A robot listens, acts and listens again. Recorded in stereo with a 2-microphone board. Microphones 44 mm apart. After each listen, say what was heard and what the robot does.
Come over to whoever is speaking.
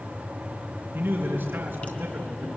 The man speaking: about 60° right or 120° right. Turn 60° right.
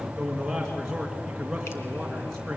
So it is at 10° right. Turn 10° right.
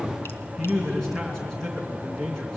Drive 1.0 m forward.
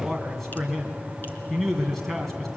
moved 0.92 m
Drive 1.0 m forward.
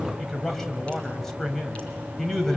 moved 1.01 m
The man speaking is now 10° left. Turn 10° left.
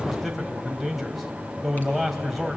Drive 1.0 m forward.
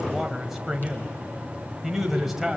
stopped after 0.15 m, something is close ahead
The man speaking is now 10° right. Turn 10° right.
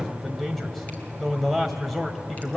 Arrived at the man speaking, straight ahead.